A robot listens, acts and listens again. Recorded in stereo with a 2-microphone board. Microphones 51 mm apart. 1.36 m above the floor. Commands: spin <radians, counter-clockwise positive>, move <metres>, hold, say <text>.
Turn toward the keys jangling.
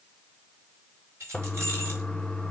spin -0.96
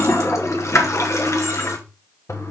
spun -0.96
hold
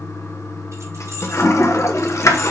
hold
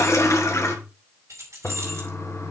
spin -1.22
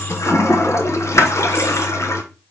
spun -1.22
hold
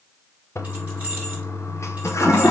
hold
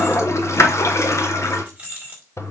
spin -0.44
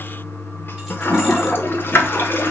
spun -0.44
hold
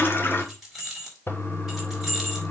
say Found it: keys jangling, straight ahead, 2 to 4 m away.